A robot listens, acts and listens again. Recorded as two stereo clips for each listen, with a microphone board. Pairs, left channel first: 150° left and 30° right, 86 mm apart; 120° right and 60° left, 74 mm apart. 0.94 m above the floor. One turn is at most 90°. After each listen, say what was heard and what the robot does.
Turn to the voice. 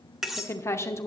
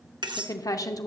The woman speaking: 155° right. Turn 90° right.
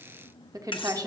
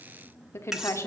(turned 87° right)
The woman speaking is now 70° right. Turn 70° right.
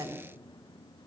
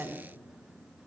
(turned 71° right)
Found it: a woman speaking, straight ahead.